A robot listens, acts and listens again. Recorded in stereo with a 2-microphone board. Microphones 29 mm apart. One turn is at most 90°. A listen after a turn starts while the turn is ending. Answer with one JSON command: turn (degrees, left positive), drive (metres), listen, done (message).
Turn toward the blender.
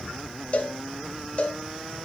{"listen": true}
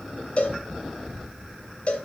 {"listen": true}
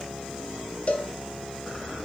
{"done": "I can't make out a blender, only a cowbell."}